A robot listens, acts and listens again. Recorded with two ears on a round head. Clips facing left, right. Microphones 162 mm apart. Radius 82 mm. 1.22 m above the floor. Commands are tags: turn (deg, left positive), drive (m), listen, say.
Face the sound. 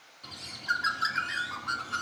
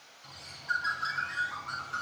<turn deg="70"/>
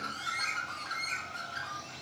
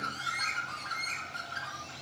<say>Found it: a bird, straight ahead, 2 to 4 m away.</say>